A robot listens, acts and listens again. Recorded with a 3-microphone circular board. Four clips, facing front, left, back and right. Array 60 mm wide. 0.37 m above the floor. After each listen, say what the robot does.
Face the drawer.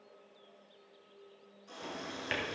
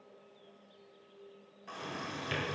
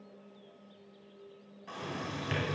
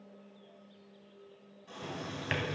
Turn 70° right.
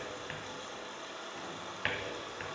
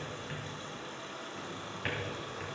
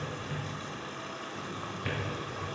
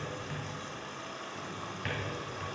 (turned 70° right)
Found it: a drawer, straight ahead, 1 to 2 m away.